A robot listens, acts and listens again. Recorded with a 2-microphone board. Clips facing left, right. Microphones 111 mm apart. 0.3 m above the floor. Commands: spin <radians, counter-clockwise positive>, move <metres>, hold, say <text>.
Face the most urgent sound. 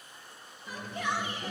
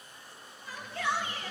spin 0.26
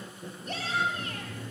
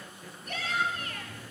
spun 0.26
spin 2.62
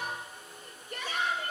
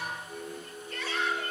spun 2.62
spin 0.26
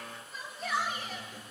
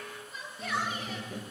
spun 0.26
say Found it: a shout, straight ahead.